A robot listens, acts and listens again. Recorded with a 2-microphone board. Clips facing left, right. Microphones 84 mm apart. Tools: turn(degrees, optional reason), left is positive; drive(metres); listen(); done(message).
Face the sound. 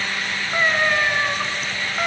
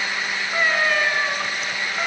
turn(degrees=30)
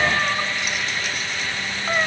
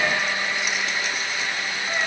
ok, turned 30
turn(degrees=140, reason="So it is at 140° left.")
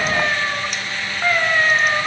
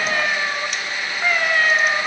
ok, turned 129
turn(degrees=10, reason="The cat meowing is now 10° left.")
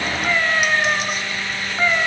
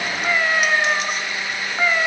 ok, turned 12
done("Found it: a cat meowing, straight ahead, 2 to 4 m away.")